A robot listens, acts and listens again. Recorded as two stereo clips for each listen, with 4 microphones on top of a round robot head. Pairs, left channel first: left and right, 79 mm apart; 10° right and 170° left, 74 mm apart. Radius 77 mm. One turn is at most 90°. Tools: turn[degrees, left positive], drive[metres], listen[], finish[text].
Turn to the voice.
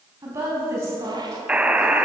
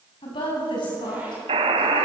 Thought: The woman speaking: 30° right.
Action: turn[-30]
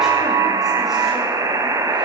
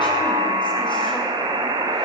Action: listen[]
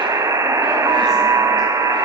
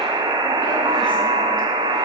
Action: listen[]
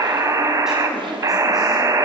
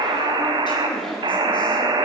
Action: finish[Facing where the woman speaking came from. I can't hear it now.]